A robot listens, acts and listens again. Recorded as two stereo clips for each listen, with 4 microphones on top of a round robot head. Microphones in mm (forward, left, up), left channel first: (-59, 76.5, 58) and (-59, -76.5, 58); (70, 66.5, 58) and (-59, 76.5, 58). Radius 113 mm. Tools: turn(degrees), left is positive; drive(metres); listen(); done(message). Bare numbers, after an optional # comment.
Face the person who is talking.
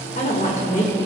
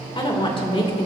# The woman speaking: 40° left.
turn(40)
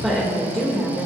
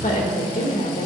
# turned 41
done("Facing the woman speaking.")